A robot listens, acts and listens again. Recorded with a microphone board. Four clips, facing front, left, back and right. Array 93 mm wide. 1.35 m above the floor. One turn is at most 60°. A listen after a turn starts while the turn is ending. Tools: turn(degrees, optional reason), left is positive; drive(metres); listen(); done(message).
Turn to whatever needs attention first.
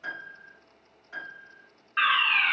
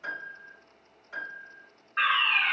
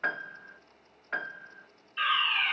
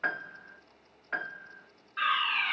turn(degrees=20, reason="The fire alarm: 20° left.")
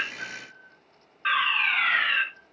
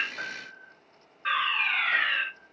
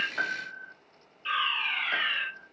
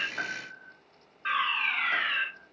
done("Facing the fire alarm, over 4 m away.")